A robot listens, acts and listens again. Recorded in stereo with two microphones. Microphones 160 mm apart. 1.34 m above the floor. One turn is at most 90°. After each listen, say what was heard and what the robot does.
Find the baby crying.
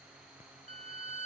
Keep listening.
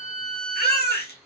Turn 90° left.
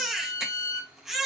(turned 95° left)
Found it: a baby crying, straight ahead, 1 to 2 m away.